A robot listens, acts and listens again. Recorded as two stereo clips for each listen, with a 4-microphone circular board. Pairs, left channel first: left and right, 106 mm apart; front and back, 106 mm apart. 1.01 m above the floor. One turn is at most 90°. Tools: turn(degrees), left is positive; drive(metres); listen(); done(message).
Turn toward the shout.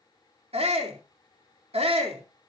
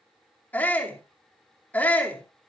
turn(degrees=-75)
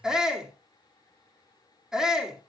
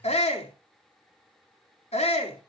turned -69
done("Facing the shout.")